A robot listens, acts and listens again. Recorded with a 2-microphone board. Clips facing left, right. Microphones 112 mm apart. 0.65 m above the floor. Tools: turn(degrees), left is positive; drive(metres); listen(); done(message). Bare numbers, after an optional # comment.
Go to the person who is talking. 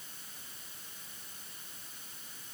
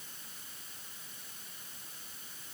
listen()
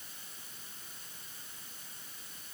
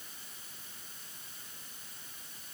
listen()
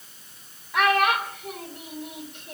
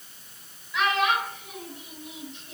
# The child speaking: about 55° left or 125° left.
turn(55)
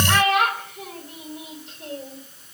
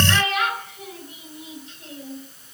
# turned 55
# So it is at 70° left.
turn(70)
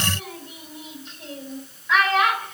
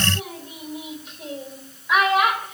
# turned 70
# The child speaking is now 10° right.
turn(-10)
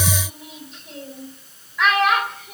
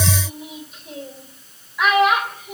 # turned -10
drive(1.0)
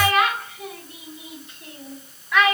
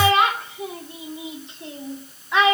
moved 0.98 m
# The child speaking is now 25° right.
turn(-25)
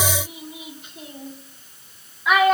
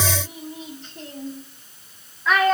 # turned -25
# The child speaking is now 10° left.
turn(10)
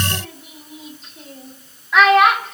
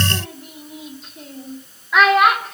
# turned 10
drive(1.0)
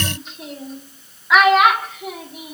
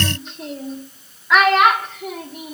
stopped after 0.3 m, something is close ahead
done("Arrived at the child speaking, straight ahead.")